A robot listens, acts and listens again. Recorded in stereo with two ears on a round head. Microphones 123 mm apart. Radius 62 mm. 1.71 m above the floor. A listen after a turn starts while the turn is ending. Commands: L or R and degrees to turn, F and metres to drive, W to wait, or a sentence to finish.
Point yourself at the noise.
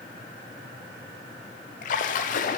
L60
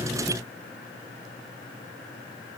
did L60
W
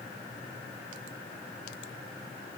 I heard a splash, but can't make it out now. It was about straight ahead or 60° left.